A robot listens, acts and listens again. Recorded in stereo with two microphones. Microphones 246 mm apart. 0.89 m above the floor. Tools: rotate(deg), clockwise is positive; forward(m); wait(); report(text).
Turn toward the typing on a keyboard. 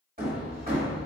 wait()
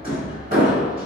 wait()
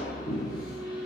report("I can't make out typing on a keyboard to turn to.")